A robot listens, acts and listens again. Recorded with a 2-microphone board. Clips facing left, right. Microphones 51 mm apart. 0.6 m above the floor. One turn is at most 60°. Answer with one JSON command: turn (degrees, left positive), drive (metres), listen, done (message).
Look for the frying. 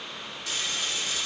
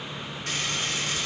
{"turn": -50}
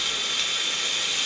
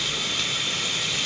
{"done": "Facing the frying."}